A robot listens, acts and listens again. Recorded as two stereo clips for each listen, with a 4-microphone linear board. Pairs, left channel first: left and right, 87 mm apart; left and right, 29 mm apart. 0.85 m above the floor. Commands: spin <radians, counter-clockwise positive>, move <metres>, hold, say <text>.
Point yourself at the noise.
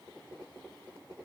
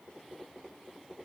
hold
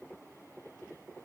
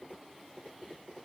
hold
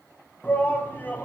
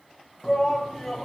spin 0.26
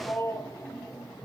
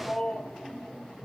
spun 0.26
spin 2.62
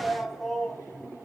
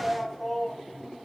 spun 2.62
say Facing the shout, over 4 m away.